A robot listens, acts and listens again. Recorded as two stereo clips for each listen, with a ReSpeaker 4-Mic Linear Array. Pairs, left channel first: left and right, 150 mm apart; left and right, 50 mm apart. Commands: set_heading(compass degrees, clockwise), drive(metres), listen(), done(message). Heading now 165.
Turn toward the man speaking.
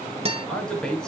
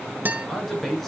set_heading(135)
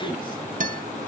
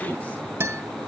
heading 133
set_heading(348)
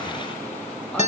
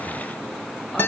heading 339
listen()
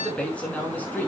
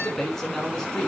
set_heading(329)
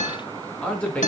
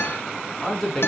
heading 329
set_heading(319)
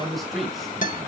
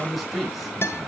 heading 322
done("Found it: a man speaking, straight ahead.")